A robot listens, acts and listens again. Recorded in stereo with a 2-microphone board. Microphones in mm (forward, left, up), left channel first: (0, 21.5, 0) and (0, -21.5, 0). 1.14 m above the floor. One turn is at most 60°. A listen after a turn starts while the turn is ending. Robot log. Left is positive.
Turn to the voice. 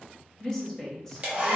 cmd yaw +30
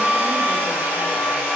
cmd idle
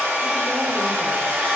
cmd idle
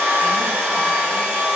end: I heard a woman speaking, but can't make it out now. It was about 20° right or 140° left.